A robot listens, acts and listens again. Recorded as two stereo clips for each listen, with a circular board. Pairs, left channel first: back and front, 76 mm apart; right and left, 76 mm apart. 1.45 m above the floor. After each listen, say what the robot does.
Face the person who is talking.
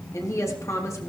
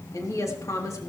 Turn 130° right.
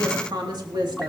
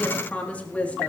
Turn 20° right.
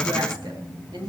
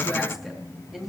Facing the woman speaking, 2 to 4 m away.